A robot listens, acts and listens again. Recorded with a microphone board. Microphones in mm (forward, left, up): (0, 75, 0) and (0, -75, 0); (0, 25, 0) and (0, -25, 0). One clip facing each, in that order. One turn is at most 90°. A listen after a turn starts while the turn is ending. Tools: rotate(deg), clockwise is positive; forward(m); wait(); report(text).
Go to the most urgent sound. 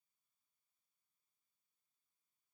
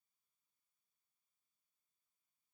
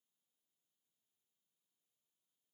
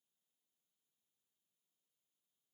wait()
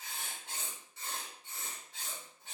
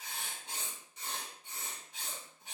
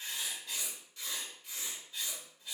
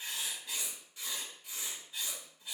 wait()
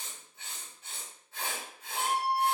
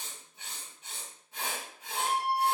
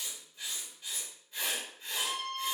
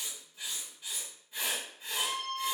rotate(50)
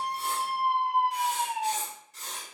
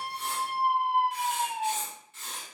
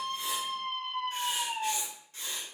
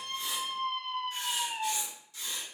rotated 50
forward(1.0)
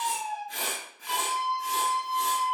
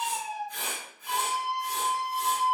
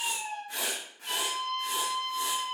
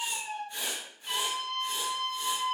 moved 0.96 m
forward(1.0)
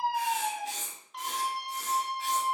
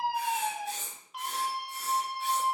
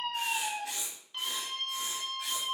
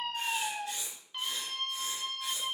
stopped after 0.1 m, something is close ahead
report("I am next to the scream.")